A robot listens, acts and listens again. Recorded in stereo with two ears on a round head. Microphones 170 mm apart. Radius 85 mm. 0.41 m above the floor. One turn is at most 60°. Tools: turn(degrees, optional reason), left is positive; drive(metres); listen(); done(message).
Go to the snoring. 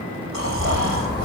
turn(degrees=-60)
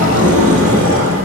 turn(degrees=-30, reason="Nothing new. It was at 30° right.")
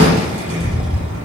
listen()
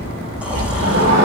done("Facing where the snoring came from. I can't hear it now. I did not reach it.")